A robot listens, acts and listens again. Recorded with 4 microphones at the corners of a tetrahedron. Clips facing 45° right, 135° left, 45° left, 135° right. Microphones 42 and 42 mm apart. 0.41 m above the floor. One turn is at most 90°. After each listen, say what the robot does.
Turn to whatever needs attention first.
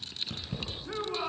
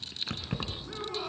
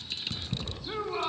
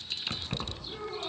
Turn 20° left.
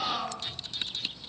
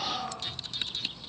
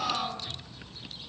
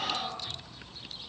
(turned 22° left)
Facing the shout.